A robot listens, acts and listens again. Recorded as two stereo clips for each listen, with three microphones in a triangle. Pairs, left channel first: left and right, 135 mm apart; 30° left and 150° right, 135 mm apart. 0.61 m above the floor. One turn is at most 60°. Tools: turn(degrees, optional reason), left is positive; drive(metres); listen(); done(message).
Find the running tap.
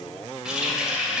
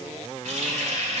turn(degrees=-60, reason="The running tap: 175° right.")
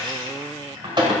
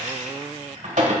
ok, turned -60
turn(degrees=-60, reason="The running tap is now 140° right.")
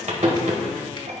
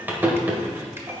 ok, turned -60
turn(degrees=-60, reason="The running tap is now 75° right.")
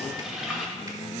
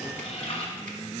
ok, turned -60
done("Facing the running tap.")